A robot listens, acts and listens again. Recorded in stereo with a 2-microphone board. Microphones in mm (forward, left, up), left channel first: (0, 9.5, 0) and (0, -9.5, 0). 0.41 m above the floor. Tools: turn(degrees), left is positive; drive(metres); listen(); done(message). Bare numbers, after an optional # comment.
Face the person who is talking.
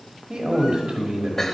# The man speaking: about 50° right or 130° right.
turn(-50)
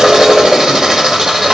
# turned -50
listen()
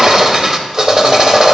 listen()
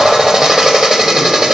done("I heard a man speaking, but can't make it out now. It was about straight ahead or 80° right.")